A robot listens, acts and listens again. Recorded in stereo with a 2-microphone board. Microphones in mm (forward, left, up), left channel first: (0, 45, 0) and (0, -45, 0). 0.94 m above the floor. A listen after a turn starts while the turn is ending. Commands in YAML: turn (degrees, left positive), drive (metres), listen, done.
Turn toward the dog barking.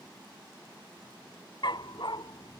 turn: 65
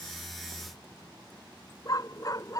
turn: 45
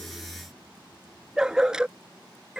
turn: -10
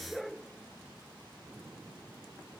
done: "Found it: a dog barking, straight ahead."